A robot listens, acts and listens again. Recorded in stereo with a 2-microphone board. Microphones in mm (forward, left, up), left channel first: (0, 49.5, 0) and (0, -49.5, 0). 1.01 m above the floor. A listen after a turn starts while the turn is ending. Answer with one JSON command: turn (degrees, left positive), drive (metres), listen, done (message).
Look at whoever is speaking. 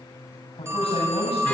{"turn": 90}
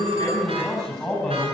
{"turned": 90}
{"done": "Found it: a man speaking, straight ahead."}